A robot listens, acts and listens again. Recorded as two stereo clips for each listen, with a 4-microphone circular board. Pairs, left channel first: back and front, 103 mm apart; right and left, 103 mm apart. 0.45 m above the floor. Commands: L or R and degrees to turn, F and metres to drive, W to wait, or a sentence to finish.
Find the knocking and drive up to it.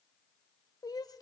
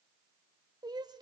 W
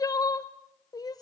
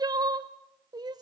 W
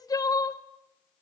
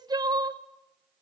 I can't make out knocking to turn to.